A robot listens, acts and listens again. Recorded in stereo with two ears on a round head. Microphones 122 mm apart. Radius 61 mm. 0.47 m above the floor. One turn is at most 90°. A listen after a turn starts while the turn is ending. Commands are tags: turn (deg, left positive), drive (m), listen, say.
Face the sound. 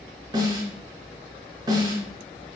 <turn deg="-30"/>
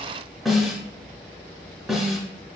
<say>Facing the snare drum.</say>